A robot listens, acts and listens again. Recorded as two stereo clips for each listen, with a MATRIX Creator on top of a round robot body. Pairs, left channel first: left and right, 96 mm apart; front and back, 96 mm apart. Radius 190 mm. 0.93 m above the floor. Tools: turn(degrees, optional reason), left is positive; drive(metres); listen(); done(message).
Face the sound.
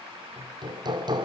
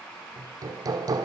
turn(degrees=-130, reason="The hammering: 130° right.")
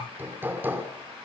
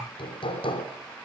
turn(degrees=-20, reason="The hammering is now 20° right.")
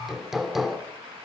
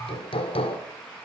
done("Facing the hammering.")